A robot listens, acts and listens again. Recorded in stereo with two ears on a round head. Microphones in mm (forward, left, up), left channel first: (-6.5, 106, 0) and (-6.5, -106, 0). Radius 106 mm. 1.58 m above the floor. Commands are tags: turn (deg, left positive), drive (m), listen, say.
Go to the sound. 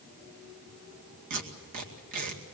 <turn deg="-90"/>
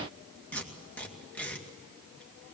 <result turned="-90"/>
<drive m="1.0"/>
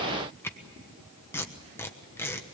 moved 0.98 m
<turn deg="10"/>
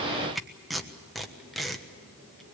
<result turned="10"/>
<drive m="1.0"/>
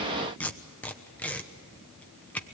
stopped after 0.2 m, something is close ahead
<say>Arrived at the tape being pulled, straight ahead.</say>